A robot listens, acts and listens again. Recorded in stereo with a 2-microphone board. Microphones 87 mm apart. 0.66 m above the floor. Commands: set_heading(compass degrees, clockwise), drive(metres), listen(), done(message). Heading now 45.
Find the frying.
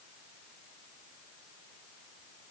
listen()
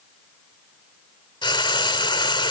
set_heading(345)
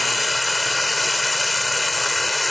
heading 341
done("Found it: frying, straight ahead.")